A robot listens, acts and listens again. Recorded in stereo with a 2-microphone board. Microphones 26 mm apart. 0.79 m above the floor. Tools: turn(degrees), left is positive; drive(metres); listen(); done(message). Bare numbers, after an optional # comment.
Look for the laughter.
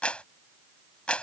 listen()
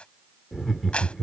turn(30)
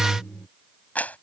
# So it is at 150° left.
turn(150)
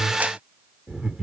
# The laughter is now 40° right.
turn(-40)
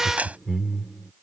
# The laughter is now 20° right.
turn(-20)
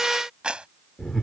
done("Facing the laughter.")